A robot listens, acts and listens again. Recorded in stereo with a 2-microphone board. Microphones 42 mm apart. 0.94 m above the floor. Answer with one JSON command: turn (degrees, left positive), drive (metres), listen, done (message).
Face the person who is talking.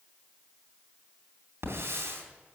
{"listen": true}
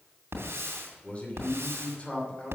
{"turn": 30}
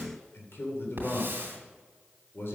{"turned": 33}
{"turn": 115}
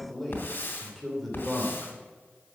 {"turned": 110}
{"done": "Found it: a man speaking, straight ahead, 2 to 4 m away."}